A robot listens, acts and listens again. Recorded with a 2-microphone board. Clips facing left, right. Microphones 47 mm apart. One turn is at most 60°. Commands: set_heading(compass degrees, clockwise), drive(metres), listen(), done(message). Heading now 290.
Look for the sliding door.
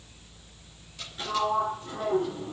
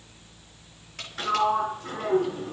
set_heading(350)
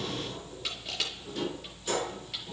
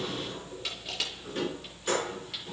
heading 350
set_heading(30)
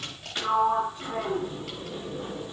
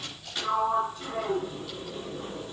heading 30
set_heading(15)
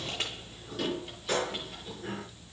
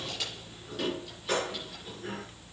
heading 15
done("Facing the sliding door.")